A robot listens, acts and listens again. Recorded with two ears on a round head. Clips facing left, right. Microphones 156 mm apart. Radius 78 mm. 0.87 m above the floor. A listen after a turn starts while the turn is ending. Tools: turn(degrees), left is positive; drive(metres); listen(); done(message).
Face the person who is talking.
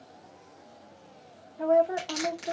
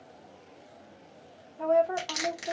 turn(degrees=30)
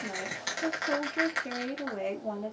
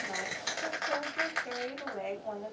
turn(degrees=135)
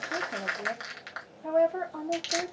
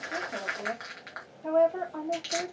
turn(degrees=10)
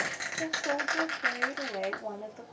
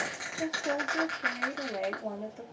done("Found it: a woman speaking, straight ahead.")